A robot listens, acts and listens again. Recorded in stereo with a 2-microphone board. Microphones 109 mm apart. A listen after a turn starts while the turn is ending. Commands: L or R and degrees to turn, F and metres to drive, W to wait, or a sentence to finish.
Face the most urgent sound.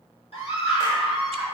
L60
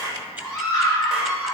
L40
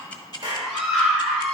Found it: a scream, straight ahead, 1 to 2 m away.